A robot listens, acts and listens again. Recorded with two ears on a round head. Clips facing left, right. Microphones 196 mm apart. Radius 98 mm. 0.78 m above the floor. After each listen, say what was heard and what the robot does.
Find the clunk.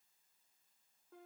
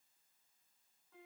Keep listening.
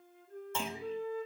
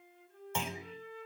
Turn 30° right.
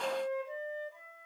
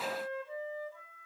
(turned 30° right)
Keep listening.
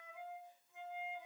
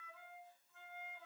I heard a clunk, but can't make it out now. It was about 15° left or 135° right.